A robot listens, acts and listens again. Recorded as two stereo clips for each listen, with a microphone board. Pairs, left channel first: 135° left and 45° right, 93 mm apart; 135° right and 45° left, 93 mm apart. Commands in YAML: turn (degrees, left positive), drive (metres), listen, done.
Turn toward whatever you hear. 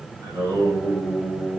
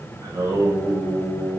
done: "Found it: singing, straight ahead."